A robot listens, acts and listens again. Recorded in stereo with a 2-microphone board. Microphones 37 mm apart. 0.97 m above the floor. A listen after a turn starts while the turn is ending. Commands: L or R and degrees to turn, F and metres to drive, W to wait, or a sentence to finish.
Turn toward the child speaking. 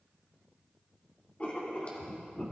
W
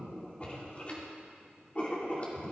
W
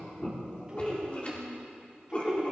R25
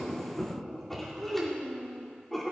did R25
Facing the child speaking, over 4 m away.